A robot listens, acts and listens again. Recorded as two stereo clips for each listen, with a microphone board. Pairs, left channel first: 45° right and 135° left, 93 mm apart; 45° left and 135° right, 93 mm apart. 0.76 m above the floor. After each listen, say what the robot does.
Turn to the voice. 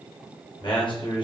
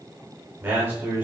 Turn 70° right.
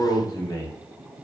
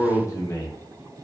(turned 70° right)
Facing the man speaking.